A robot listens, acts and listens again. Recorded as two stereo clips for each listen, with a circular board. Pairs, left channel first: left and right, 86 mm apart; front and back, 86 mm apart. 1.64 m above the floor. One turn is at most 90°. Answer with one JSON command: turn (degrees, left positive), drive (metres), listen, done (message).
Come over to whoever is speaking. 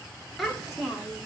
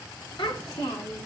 {"drive": 1.0}
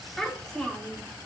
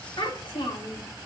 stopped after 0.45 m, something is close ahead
{"done": "Blocked. The child speaking is further on, straight ahead."}